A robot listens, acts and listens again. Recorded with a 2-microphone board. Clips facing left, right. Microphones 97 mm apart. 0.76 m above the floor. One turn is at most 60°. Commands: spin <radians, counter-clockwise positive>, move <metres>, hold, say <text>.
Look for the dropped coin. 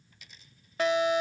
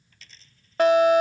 spin 0.52
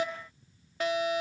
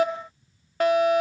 hold
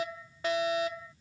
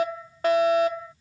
say I heard a dropped coin, but can't make it out now. It was about 15° right or 135° left.